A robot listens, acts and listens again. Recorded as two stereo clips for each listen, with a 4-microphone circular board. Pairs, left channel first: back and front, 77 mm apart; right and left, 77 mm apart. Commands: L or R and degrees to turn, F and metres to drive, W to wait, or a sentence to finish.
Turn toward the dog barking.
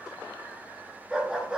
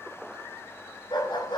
R80
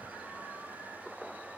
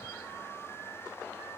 W
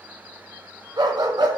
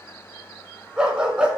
L15
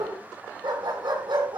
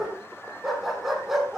Facing the dog barking, over 4 m away.